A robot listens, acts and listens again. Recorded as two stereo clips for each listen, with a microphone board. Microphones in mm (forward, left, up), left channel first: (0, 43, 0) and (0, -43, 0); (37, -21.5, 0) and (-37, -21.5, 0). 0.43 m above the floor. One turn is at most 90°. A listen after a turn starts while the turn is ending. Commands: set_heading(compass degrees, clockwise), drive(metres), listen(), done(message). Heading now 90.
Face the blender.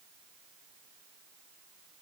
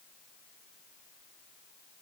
listen()
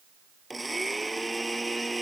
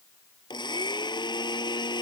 done("Facing the blender.")